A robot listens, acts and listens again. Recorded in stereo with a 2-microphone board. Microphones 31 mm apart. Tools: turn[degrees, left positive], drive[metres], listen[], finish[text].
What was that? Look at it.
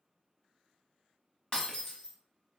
Thought: The breaking glass: about 30° left or 150° left.
Action: turn[30]
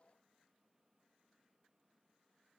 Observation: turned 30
Action: listen[]
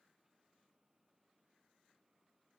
Action: finish[I heard breaking glass, but can't make it out now. It was about straight ahead or 120° left.]